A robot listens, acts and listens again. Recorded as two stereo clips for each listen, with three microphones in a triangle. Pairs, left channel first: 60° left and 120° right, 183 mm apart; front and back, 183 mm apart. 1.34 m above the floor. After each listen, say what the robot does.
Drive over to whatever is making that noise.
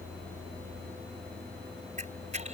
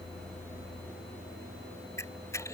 Turn 75° right.
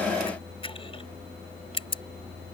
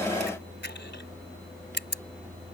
Drive 1.0 m forward.
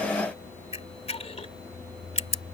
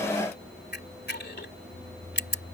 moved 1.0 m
Turn 10° left.
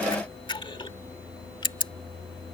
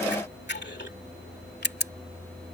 Drive 1.0 m forward.
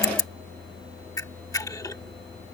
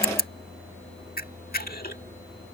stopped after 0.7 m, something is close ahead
I am next to the camera shutter.